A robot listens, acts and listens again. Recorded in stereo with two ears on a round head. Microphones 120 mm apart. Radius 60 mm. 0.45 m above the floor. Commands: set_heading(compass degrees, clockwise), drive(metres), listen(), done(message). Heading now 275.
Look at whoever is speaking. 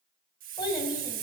set_heading(245)
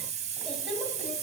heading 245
listen()
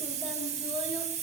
listen()
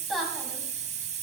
done("Facing the child speaking, 2 to 4 m away.")